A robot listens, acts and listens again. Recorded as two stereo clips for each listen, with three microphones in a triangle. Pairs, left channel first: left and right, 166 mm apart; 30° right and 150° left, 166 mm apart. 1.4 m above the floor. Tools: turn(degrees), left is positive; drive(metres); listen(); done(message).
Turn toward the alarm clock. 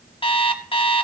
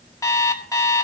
turn(degrees=35)
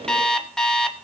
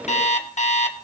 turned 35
done("Found it: an alarm clock, straight ahead.")